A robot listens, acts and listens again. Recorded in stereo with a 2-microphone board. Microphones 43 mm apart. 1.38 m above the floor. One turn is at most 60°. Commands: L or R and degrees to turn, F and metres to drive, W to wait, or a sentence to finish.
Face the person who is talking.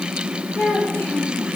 L60
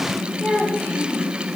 L45
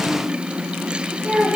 Found it: a child speaking, straight ahead, 2 to 4 m away.